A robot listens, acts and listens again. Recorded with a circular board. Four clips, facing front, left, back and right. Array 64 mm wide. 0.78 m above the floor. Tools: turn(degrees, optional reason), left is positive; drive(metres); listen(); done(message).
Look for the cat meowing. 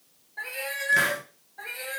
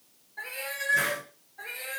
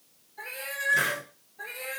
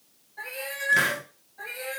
turn(degrees=-10, reason="The cat meowing: 10° right.")
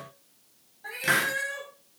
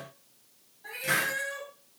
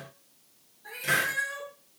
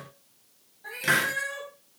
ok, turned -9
turn(degrees=-20, reason="The cat meowing is now 20° right.")
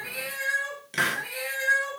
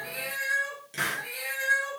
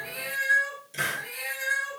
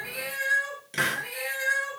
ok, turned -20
turn(degrees=-25, reason="The cat meowing is now 25° right.")
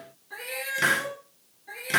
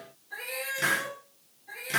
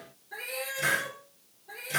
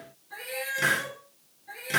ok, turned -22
done("Facing the cat meowing.")